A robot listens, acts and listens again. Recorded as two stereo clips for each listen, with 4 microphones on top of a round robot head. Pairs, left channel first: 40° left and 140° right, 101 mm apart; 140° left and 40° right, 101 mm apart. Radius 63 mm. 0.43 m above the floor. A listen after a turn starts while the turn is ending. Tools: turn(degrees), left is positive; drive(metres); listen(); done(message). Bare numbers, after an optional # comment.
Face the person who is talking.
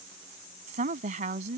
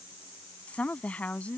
# The woman speaking: 140° right.
turn(-140)
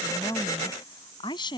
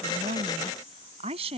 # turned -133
# The woman speaking is now 10° right.
turn(-10)
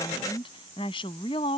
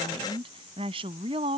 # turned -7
done("Found it: a woman speaking, straight ahead.")